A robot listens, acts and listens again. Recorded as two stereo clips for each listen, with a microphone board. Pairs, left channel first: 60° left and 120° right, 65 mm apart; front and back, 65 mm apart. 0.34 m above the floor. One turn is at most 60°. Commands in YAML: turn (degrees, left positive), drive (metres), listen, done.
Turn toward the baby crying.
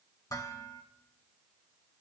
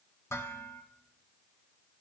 listen: true
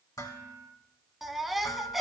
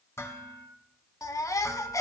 turn: -35
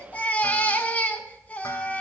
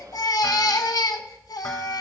done: "Found it: a baby crying, straight ahead."